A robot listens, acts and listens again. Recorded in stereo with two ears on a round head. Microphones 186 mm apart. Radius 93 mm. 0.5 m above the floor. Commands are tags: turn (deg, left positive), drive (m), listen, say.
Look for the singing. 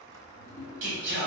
<turn deg="-65"/>
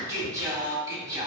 <turn deg="-20"/>
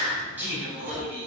<turn deg="-10"/>
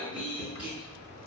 <say>Found it: singing, straight ahead, 2 to 4 m away.</say>